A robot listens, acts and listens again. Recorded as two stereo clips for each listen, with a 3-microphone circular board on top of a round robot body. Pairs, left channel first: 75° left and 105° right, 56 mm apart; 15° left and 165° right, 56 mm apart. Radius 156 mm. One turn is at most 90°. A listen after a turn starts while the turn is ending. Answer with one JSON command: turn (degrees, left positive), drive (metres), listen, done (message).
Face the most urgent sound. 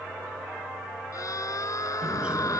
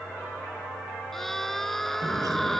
{"turn": 90}
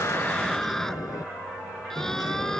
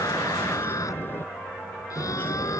{"done": "Facing the scream."}